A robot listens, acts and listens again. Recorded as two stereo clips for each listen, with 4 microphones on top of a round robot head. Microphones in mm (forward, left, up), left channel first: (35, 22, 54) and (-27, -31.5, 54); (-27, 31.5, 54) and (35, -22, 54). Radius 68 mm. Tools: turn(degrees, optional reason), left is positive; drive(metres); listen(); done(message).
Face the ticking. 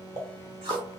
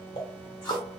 turn(degrees=170, reason="The ticking: 170° left.")
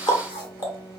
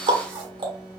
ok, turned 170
done("Found it: ticking, straight ahead, 1 to 2 m away.")